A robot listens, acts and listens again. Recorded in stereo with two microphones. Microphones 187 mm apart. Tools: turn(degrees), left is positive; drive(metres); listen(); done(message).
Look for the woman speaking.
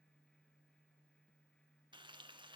listen()
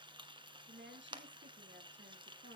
turn(degrees=-70)
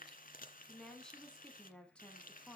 done("Facing the woman speaking.")